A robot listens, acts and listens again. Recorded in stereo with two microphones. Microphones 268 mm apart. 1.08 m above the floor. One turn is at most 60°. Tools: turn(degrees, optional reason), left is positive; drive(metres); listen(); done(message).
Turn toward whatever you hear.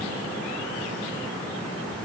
listen()
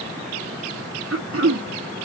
turn(degrees=-50, reason="The throat clearing: about 50° right or 130° right.")
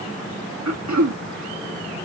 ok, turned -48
turn(degrees=-60, reason="So it is at 80° right.")
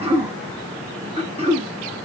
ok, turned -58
turn(degrees=-20, reason="The throat clearing is now 20° right.")
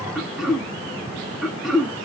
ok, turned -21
done("Facing the throat clearing, under 1 m away.")